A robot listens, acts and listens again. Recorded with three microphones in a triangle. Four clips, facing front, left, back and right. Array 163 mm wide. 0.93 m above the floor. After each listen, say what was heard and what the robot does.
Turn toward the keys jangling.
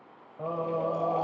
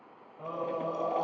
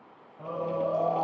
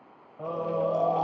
Keep listening.
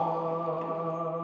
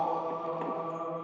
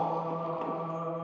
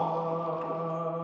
Keep listening.
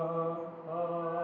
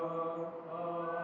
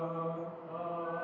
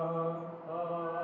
I can't make out keys jangling to turn to.